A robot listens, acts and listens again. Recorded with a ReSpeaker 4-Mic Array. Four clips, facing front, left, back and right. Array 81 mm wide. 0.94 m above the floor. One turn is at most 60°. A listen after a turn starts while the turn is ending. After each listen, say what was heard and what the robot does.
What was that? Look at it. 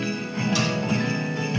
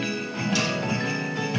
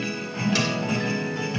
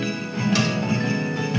Keep listening.
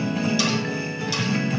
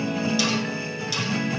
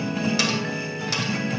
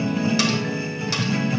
The cutlery clinking: 140° right. Turn 60° right.
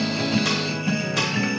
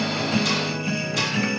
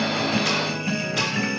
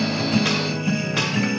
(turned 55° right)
Nothing new. It was at 85° right. Turn 60° right.
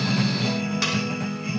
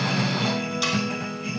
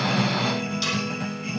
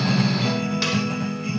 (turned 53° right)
The cutlery clinking is now 30° right. Turn 30° right.
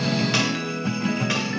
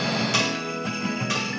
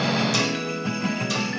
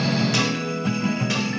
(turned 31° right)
Keep listening.
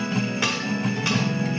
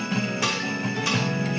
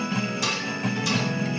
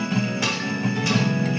Found it: cutlery clinking, straight ahead, 2 to 4 m away.